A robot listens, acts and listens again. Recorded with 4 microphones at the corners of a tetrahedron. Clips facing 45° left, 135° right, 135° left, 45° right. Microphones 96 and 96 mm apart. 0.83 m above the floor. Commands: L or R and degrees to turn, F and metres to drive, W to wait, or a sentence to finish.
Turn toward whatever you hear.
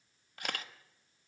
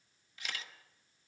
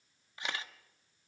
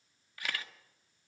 L70
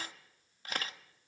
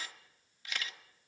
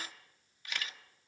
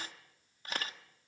Facing the camera shutter, 1 to 2 m away.